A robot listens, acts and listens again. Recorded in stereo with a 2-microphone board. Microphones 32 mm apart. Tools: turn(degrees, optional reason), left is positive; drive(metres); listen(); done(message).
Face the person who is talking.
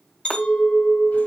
listen()
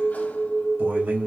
turn(degrees=-90)
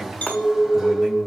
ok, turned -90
listen()
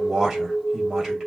turn(degrees=-10, reason="The man speaking is now 10° right.")
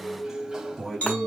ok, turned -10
done("Facing the man speaking, 2 to 4 m away.")